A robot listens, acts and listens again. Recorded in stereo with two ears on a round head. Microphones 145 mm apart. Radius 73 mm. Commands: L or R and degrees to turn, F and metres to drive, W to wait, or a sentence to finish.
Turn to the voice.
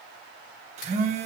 W
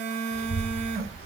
L35
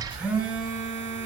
L110
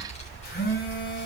L40
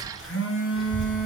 Found it: a child speaking, straight ahead.